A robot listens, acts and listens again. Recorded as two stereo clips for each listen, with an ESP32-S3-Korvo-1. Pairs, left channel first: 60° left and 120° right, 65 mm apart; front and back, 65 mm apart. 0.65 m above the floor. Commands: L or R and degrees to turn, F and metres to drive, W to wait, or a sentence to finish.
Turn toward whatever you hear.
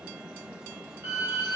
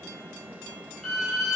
R85
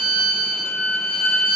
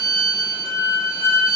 L10
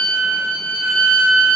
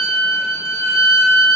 Facing the violin, 1 to 2 m away.